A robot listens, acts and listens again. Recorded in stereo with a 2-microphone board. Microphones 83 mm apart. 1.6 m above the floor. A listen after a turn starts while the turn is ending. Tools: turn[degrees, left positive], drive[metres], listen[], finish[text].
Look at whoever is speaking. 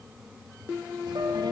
Thought: The child speaking: about 60° right or 120° right.
Action: turn[-60]
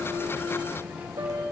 Thought: So it is at 20° right.
Action: turn[-20]
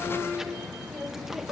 Action: finish[Found it: a child speaking, straight ahead.]